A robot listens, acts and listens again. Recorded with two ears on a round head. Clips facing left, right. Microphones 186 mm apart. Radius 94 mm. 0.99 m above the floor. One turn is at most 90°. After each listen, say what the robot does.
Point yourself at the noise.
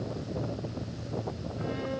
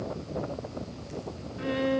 Turn 65° right.
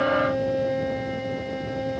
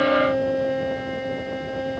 Found it: a violin, straight ahead.